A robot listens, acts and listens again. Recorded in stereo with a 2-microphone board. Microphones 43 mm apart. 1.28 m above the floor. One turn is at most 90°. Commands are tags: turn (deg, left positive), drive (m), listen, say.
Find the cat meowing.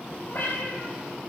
<turn deg="45"/>
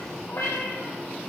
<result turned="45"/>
<turn deg="80"/>
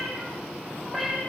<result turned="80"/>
<say>Found it: a cat meowing, straight ahead, over 4 m away.</say>